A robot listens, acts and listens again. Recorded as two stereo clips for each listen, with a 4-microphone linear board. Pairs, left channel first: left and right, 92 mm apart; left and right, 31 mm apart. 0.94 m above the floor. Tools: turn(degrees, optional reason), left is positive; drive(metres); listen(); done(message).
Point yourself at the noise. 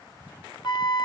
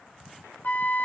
turn(degrees=55, reason="The flute: about 55° left or 125° left.")
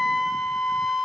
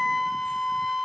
done("Facing the flute.")